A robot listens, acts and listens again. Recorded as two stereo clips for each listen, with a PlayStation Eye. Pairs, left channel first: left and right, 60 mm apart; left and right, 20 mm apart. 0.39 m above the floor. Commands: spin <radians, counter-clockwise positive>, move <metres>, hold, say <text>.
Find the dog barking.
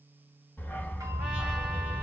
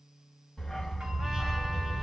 spin 0.52
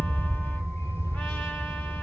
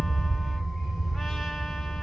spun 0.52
spin 2.09
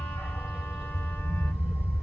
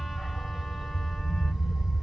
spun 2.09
spin -0.17
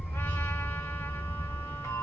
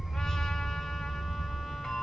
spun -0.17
say Found it: a dog barking, straight ahead.